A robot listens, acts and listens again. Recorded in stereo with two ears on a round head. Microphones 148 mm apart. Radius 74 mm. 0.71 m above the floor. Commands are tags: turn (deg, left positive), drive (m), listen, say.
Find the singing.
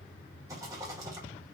<listen/>
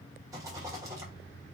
<listen/>
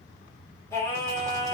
<turn deg="30"/>
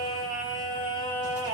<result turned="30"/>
<turn deg="-35"/>
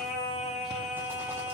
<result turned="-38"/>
<say>Found it: singing, straight ahead, 2 to 4 m away.</say>